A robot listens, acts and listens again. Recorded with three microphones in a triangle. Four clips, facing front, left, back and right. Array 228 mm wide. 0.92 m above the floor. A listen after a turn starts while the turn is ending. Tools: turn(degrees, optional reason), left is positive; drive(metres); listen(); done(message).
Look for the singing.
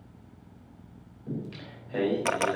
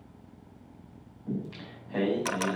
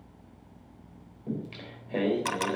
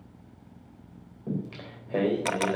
turn(degrees=-105, reason="The singing: 105° right.")
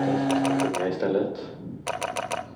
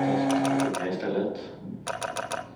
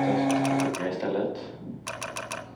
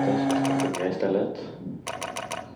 turn(degrees=-50, reason="The singing is now 50° right.")
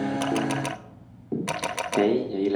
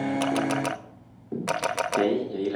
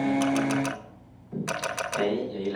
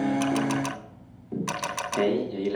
turn(degrees=15, reason="The singing is now 15° left.")
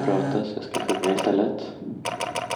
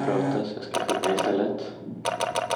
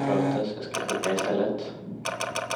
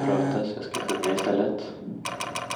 done("Found it: singing, straight ahead.")